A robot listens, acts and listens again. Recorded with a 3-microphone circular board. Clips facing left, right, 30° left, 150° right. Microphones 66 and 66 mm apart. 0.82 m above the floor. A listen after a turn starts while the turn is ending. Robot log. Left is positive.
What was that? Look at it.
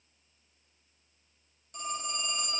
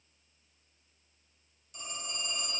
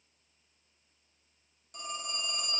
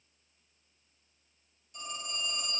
note: The phone ringing: 50° left.
cmd yaw +50
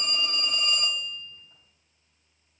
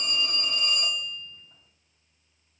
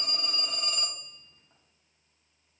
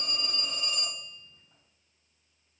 note: The phone ringing is now 15° left.
cmd yaw +15
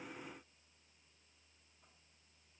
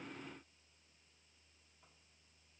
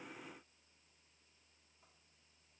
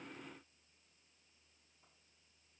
cmd idle
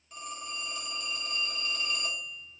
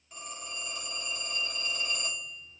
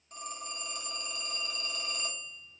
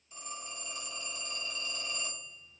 end: Found it: a phone ringing, straight ahead.